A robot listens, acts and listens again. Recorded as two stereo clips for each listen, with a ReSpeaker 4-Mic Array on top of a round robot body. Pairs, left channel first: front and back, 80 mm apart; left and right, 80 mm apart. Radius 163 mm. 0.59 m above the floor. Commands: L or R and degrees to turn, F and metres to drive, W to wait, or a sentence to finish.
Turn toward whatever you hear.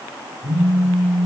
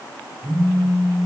R120
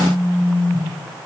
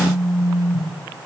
L15
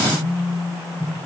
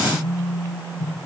Facing the phone buzzing.